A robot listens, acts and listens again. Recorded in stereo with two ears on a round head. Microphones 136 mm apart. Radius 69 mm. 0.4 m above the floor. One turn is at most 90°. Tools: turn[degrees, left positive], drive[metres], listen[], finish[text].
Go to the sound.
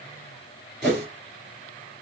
Action: turn[30]
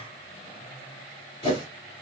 Thought: So it is at 150° left.
Action: turn[90]
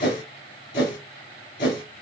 Thought: The whoosh is now 70° left.
Action: turn[70]
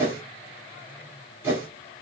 Thought: The whoosh is now 15° right.
Action: turn[-15]
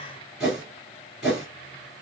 Action: drive[1.0]
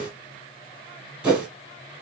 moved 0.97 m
Thought: The whoosh is now 10° right.
Action: turn[-10]
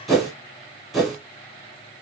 Action: drive[1.0]
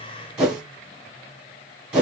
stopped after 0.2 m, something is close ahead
Action: finish[I am next to the whoosh.]